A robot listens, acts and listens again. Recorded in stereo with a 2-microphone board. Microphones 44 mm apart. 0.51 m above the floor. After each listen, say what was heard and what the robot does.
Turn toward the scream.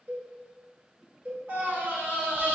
The scream: about 60° right or 120° right. Turn 60° right.
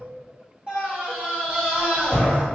So it is at 30° right. Turn 30° right.
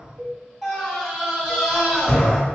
The scream is now 20° right. Turn 20° right.
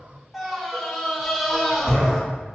Found it: a scream, straight ahead, 1 to 2 m away.